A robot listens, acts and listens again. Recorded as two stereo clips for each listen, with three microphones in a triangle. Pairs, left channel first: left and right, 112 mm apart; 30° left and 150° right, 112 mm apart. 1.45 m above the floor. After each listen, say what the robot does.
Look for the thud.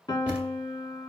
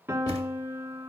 Turn 15° right.
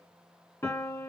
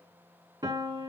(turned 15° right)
I heard a thud from this way, but can't make it out now.